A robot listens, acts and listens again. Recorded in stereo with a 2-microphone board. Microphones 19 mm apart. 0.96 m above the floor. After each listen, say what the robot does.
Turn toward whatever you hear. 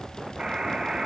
Turn 40° right.
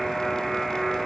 Found it: a buzzer, straight ahead.